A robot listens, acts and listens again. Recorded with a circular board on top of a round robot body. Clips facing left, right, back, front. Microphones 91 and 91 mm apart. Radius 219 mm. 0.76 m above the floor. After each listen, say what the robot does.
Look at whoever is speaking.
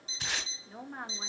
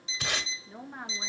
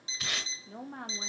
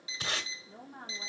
Turn 180° left.
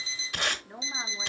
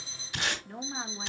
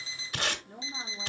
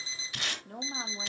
Turn 10° left.
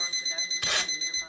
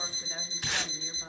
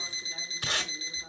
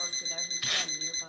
Keep listening.
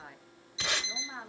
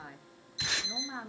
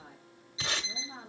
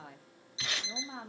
Found it: a woman speaking, straight ahead.